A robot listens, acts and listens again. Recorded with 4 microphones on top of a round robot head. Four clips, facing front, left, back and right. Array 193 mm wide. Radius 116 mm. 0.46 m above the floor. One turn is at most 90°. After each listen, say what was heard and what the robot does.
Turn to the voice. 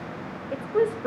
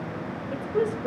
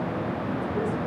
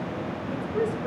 The woman speaking: 20° left. Turn 20° left.
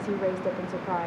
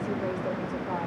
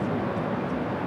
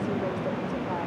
Keep listening.
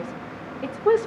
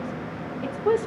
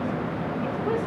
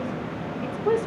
The woman speaking is now 10° left. Turn 10° left.
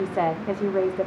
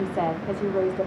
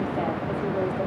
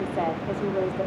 The woman speaking is now 25° left. Turn 25° left.
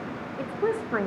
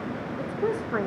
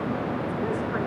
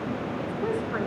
The woman speaking is now 40° left. Turn 40° left.
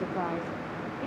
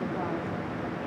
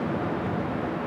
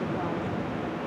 Keep listening.
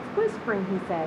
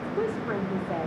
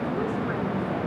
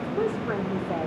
The woman speaking is now 10° right. Turn 10° right.
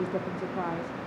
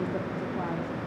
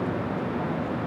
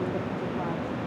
Keep listening.
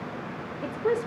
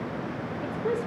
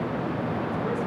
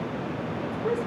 Facing the woman speaking, 1 to 2 m away.